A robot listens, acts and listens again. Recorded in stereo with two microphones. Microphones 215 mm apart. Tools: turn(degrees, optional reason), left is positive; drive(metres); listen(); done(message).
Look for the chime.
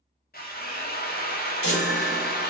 turn(degrees=90)
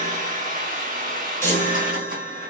turn(degrees=10, reason="So it is at 10° left.")
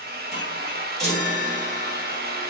done("Found it: a chime, straight ahead.")